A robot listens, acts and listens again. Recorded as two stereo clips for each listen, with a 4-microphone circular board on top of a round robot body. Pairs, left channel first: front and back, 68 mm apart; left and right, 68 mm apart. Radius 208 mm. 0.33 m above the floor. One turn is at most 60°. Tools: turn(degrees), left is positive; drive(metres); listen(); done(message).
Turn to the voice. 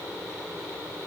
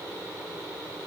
listen()
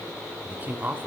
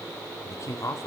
turn(degrees=60)
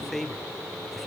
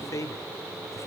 turn(degrees=60)
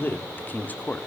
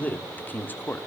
turn(degrees=50)
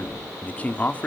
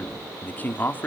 turn(degrees=50)
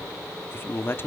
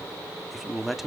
done("Facing the man speaking, 1 to 2 m away.")